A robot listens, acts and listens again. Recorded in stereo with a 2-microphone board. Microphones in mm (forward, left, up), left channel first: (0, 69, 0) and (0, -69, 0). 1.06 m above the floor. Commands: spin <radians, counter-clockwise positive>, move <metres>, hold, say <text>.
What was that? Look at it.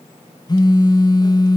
spin 0.52
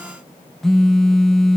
say Found it: a phone buzzing, straight ahead.